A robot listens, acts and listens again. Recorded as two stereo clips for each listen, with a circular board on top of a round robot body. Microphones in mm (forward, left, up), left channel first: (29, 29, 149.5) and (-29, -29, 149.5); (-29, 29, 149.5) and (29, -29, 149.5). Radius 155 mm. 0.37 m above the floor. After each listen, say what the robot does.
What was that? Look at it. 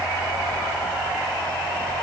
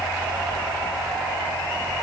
Keep listening.
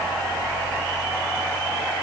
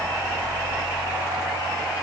Keep listening.
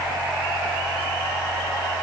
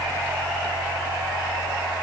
I can't make out anything.